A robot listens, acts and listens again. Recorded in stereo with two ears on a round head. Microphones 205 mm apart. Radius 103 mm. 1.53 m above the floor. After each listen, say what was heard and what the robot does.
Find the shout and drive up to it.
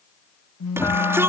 Turn 30° right.
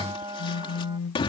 So it is at 25° left. Turn 25° left.
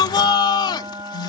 The shout is now 20° left. Turn 20° left.
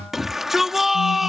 Drive 1.0 m forward.
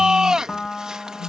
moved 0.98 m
Drive 1.0 m forward.
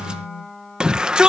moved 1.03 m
Drive 1.0 m forward.
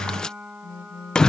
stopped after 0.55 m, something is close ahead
Arrived at the shout, straight ahead.